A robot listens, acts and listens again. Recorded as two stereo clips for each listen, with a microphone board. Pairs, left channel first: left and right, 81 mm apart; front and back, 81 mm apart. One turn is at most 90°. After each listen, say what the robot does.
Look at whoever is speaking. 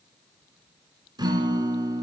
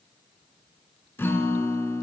Keep listening.
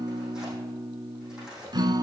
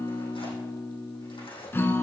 Keep listening.
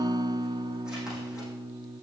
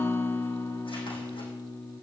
I can't make out anyone speaking, only a guitar and tearing paper.